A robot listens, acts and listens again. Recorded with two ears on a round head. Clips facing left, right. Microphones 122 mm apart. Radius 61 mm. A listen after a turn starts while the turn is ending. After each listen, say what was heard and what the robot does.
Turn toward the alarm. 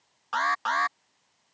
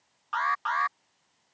The alarm: about 45° left or 135° left. Turn 45° left.
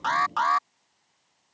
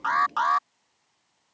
Found it: an alarm, straight ahead.